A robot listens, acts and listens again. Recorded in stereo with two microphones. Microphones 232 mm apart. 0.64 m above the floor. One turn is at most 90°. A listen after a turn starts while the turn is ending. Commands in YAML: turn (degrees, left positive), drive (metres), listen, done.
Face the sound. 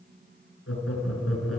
turn: 90
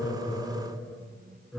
done: "Facing the laughter, over 4 m away."